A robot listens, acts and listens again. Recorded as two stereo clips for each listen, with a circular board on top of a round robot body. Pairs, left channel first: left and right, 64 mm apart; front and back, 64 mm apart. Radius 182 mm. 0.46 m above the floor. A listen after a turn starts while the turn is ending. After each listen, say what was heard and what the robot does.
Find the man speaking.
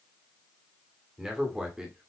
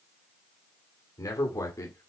The man speaking: 15° right. Turn 15° right.
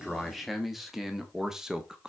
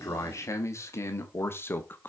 The man speaking is now 25° right. Turn 25° right.
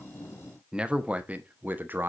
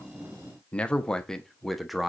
The man speaking is now 95° right. Turn 95° right.
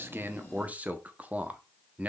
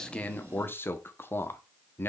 The man speaking is now 35° right. Turn 35° right.
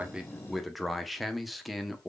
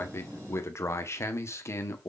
Facing the man speaking, 1 to 2 m away.